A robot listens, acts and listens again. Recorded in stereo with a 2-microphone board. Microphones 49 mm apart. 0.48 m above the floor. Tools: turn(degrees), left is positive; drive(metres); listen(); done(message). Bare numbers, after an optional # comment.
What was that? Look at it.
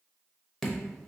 turn(30)
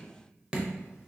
# So it is at 20° right.
turn(-20)
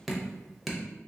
done("Facing the dripping, under 1 m away.")